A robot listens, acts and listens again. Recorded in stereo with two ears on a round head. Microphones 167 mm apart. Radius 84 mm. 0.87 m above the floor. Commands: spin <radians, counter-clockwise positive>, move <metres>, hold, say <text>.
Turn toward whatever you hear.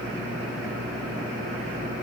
hold
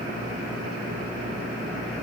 hold
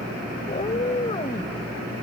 spin 0.52
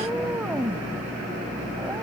spin -0.17
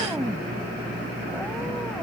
say Found it: a cat meowing, straight ahead.